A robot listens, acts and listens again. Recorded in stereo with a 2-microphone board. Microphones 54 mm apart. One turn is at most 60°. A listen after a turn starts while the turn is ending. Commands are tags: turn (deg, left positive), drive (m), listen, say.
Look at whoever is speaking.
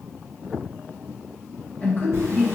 <turn deg="30"/>
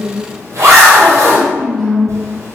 <say>Found it: a woman speaking, straight ahead.</say>